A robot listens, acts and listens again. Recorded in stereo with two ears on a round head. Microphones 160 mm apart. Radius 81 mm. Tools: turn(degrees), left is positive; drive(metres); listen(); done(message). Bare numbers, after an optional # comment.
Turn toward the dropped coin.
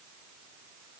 listen()
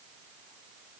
listen()
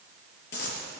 # The dropped coin: about 60° left or 120° left.
turn(60)
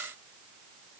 listen()
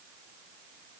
done("I heard a dropped coin, but can't make it out now. It was about straight ahead or 60° left.")